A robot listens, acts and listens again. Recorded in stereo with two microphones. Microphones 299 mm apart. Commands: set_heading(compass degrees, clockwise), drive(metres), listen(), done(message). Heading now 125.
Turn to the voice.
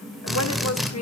set_heading(65)
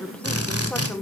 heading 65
done("Found it: a woman speaking, straight ahead.")